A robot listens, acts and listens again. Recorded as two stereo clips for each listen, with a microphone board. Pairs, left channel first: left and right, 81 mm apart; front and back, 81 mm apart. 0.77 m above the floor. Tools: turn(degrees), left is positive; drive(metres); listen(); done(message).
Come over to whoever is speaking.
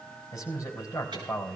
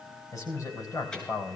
turn(degrees=40)
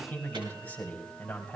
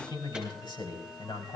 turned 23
turn(degrees=20)
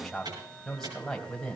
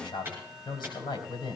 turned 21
drive(metres=1.0)
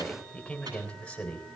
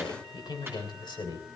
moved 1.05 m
turn(degrees=10)
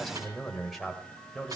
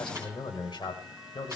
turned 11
drive(metres=1.0)
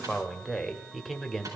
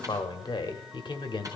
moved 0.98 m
drive(metres=1.0)
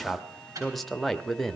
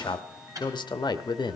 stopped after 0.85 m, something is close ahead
done("Arrived at the man speaking, straight ahead.")